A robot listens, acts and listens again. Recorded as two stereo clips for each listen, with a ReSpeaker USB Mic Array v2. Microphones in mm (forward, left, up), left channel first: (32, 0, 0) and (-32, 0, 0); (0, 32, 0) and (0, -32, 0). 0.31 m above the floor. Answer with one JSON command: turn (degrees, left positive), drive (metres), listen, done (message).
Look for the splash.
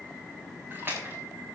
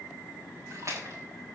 {"turn": -125}
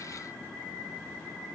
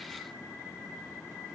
{"done": "I heard a splash from this way, but can't make it out now."}